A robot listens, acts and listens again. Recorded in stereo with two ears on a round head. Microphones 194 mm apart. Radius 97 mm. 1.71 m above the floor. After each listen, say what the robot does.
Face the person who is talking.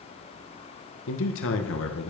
Turn 65° left.
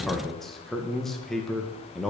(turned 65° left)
Found it: a man speaking, straight ahead, 1 to 2 m away.